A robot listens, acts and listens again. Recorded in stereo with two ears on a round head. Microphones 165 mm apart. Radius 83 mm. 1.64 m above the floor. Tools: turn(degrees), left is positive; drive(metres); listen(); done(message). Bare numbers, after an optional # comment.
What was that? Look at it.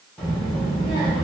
turn(30)
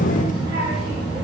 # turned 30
# So it is at 30° right.
turn(-30)
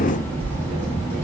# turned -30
# The child speaking is now 15° left.
turn(15)
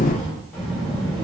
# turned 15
done("Facing the child speaking, 2 to 4 m away.")